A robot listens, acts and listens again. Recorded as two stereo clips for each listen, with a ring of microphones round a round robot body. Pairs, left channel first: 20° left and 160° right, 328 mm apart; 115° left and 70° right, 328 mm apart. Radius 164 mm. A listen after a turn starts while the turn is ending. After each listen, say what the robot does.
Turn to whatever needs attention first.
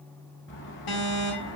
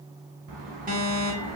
Found it: an alarm, straight ahead, 2 to 4 m away.